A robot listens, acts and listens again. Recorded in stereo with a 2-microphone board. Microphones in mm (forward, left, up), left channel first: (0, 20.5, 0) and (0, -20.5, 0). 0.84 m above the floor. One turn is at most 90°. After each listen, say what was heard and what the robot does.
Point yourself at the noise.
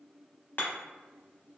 The hammering: about 55° left or 125° left. Turn 55° left.
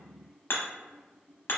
So it is at 65° left. Turn 65° left.
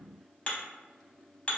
The hammering is now 25° left. Turn 25° left.
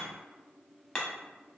The hammering is now 15° left. Turn 15° left.
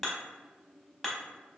Facing the hammering, under 1 m away.